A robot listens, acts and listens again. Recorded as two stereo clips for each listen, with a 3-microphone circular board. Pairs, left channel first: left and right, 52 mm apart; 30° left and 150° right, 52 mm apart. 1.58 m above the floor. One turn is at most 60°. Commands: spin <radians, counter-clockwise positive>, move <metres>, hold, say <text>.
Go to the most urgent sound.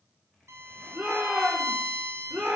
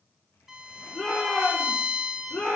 spin -0.52
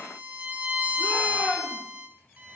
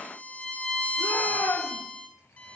spin 0.17
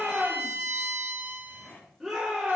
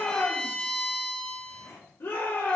move 1.0
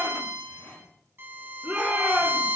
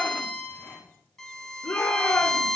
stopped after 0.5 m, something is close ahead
say Something is in my way. I am facing the shout but have not reached it.